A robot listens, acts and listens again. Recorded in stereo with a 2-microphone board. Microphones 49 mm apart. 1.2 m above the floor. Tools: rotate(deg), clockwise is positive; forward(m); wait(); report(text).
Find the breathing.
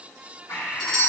rotate(-65)
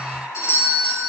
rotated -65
rotate(-45)
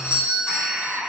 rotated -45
report("Found it: breathing, straight ahead.")